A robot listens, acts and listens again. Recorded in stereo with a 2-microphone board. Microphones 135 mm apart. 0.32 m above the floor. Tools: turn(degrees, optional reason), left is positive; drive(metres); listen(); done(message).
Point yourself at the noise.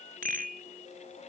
turn(degrees=-90)
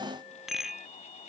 done("Facing the rattle.")